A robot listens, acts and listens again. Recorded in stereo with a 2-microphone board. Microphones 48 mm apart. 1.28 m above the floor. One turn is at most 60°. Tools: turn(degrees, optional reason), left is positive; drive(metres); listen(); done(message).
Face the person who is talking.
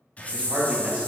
turn(degrees=-20, reason="The man speaking: about 20° right or 160° right.")
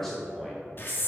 done("Facing the man speaking, 2 to 4 m away.")